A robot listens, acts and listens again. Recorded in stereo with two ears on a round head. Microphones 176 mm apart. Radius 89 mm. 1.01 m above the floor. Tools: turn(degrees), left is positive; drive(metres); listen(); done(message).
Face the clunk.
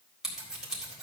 listen()
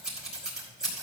listen()
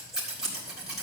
done("I can't make out a clunk to turn to.")